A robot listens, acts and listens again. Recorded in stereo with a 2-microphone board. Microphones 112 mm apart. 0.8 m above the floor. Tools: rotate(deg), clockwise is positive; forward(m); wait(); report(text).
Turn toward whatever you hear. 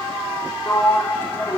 rotate(-20)
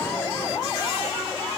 wait()
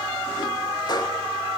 wait()
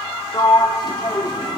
rotate(-140)
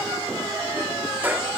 rotate(15)
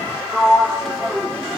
report("Found it: a sliding door, straight ahead, 1 to 2 m away.")